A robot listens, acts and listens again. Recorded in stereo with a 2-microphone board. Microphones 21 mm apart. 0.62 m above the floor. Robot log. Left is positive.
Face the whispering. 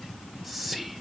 cmd yaw +30
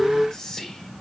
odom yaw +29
note: So it is at 150° left.
cmd yaw +150
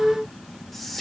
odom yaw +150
end: Facing the whispering, 1 to 2 m away.